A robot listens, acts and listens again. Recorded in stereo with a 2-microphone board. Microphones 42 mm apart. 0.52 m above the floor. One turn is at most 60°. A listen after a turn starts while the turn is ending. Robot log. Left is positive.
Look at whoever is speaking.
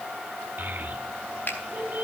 note: The child speaking: about 60° right or 120° right.
cmd yaw -60
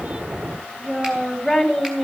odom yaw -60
end: Facing the child speaking, 2 to 4 m away.